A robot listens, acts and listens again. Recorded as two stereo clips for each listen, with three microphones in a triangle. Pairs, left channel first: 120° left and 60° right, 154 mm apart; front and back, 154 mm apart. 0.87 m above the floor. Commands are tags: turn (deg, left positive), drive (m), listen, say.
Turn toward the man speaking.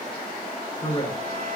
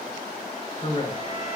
<turn deg="60"/>
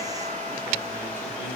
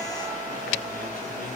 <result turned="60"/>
<listen/>
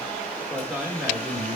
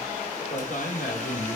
<turn deg="25"/>
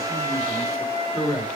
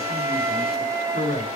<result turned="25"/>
<say>Found it: a man speaking, straight ahead.</say>